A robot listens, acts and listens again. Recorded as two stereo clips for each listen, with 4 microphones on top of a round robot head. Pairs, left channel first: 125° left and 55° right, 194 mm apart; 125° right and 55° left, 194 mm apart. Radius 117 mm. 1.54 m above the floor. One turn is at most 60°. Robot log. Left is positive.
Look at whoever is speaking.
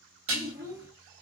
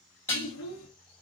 note: The child speaking: 100° right.
cmd yaw -60
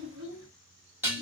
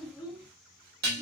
note: The child speaking is now 30° right.
cmd yaw -30
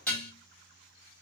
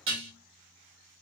cmd idle
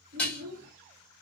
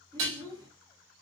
note: The child speaking is now 10° right.
cmd yaw -10
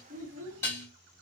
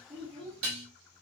end: Facing the child speaking, 1 to 2 m away.